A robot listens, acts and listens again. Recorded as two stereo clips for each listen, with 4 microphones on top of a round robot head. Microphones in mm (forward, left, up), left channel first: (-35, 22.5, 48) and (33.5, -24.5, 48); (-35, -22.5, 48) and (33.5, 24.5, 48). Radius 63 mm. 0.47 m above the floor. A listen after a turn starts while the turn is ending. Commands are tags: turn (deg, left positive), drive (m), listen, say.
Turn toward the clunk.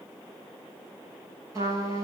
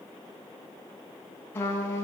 <listen/>
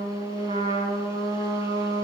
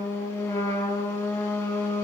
<listen/>
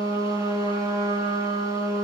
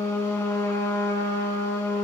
<say>I can't make out a clunk to turn to.</say>